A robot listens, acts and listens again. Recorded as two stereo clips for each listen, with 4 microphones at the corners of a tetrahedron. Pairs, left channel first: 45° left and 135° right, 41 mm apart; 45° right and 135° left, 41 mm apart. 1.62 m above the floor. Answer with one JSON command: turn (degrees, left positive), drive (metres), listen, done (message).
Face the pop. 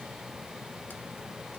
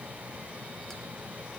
{"listen": true}
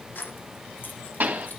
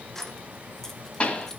{"turn": -95}
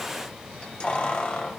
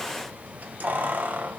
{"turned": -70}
{"turn": -25}
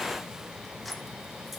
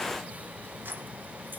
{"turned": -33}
{"done": "I heard a pop from this way, but can't make it out now."}